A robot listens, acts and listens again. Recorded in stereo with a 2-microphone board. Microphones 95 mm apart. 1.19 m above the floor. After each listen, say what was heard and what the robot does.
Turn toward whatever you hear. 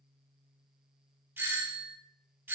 The doorbell: about 20° right or 160° right. Turn 20° right.
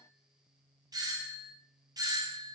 So it is at 135° right. Turn 135° right.
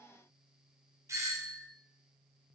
The doorbell is now 35° right. Turn 35° right.
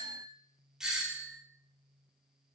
Facing the doorbell.